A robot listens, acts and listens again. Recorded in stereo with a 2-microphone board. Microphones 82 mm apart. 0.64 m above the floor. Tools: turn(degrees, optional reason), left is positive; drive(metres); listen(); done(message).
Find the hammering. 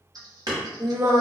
turn(degrees=-60, reason="The hammering: about 60° right or 120° right.")
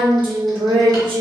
listen()
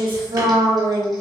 listen()
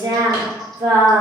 done("I heard hammering, but can't make it out now. It was about straight ahead or 60° right.")